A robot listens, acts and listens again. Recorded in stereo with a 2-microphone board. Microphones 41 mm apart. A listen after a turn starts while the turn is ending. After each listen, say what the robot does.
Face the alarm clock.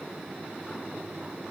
Keep listening.
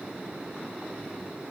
Keep listening.
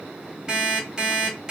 Turn 15° right.
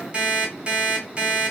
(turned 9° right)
Turn 25° right.
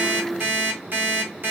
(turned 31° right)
Turn 120° right.
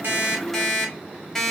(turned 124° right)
Facing the alarm clock.